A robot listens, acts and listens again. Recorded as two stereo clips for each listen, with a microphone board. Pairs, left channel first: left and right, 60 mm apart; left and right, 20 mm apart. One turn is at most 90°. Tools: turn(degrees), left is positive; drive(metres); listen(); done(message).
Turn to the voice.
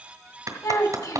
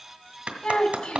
turn(degrees=65)
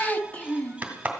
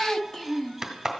turn(degrees=25)
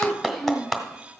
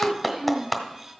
done("Found it: a child speaking, straight ahead, 1 to 2 m away.")